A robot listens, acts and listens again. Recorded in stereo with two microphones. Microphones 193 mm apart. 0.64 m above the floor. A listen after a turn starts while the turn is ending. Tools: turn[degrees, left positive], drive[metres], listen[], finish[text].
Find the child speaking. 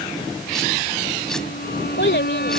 Thought: The child speaking: about 70° left or 110° left.
Action: turn[70]
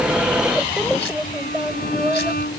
Thought: So it is at 10° right.
Action: turn[-10]
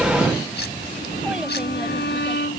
Action: listen[]
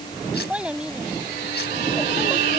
Action: finish[Facing the child speaking.]